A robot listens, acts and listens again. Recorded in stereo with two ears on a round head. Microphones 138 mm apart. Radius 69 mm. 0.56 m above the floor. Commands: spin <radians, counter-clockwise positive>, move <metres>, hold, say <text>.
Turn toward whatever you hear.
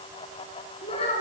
spin 0.61
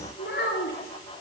spin 2.01
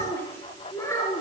spin 0.35
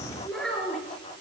say Found it: a child speaking, straight ahead, over 4 m away.